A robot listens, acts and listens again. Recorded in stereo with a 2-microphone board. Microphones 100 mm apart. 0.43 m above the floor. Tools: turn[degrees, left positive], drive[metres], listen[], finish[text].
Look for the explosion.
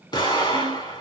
Thought: The explosion: about 45° left or 135° left.
Action: turn[45]
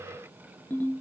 Action: listen[]
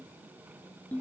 Action: finish[I heard an explosion, but can't make it out now. It was about straight ahead or 90° left.]